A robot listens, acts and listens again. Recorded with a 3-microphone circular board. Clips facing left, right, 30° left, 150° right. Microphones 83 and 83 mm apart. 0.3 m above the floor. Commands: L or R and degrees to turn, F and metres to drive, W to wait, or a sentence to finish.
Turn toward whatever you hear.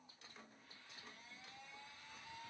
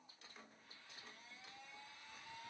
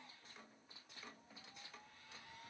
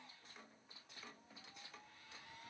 W
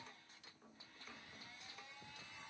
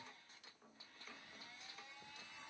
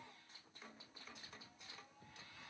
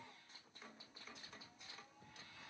W
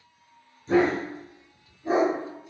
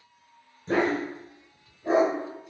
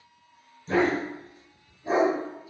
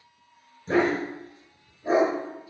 R115
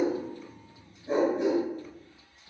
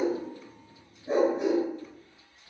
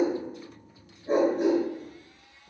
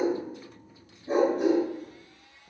R20
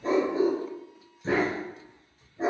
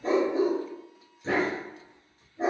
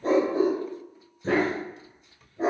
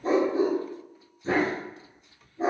Found it: a dog barking, straight ahead.